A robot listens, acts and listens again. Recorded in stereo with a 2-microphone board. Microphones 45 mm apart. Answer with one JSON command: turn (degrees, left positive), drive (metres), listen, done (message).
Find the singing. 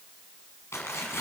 {"listen": true}
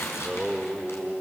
{"turn": -30}
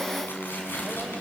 {"turn": -155}
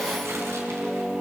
{"turn": -25}
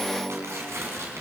{"turn": -15}
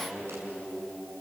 {"turn": -10}
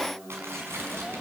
{"done": "Facing the singing."}